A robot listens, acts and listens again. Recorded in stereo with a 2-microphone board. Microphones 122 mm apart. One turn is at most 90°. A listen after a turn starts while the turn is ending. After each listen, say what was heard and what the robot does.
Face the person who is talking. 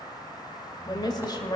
The woman speaking: about 35° left or 145° left. Turn 35° left.
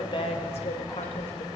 So it is at 100° left. Turn 90° left.
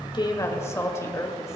The woman speaking is now 25° left. Turn 25° left.
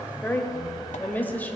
The woman speaking is now 15° left. Turn 15° left.
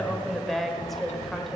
Facing the woman speaking.